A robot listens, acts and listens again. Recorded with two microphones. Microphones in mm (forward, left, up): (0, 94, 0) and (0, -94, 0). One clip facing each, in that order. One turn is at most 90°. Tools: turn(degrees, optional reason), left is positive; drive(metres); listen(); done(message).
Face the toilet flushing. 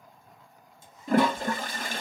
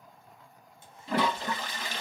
turn(degrees=55, reason="The toilet flushing: about 55° left or 125° left.")
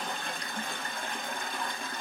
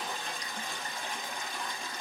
turn(degrees=70, reason="So it is at 70° left.")
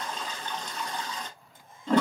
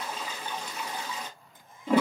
turn(degrees=-10, reason="The toilet flushing is now 10° right.")
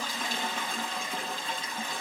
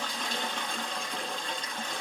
done("Found it: a toilet flushing, straight ahead.")